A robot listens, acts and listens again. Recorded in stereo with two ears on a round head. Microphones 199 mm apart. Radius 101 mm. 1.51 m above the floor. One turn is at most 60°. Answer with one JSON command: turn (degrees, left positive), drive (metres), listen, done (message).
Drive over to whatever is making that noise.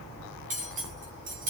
{"turn": -35}
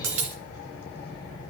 {"turn": -60}
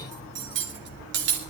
{"turn": -55}
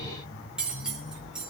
{"drive": 1.0}
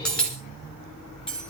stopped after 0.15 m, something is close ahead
{"done": "Something is in my way. I am facing the cutlery clinking but have not reached it."}